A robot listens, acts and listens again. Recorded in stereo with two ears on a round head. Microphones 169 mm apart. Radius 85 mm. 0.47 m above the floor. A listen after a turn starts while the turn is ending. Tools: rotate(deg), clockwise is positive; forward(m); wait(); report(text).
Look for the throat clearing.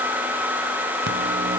wait()
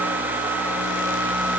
wait()
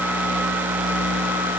report("I can't make out throat clearing to turn to.")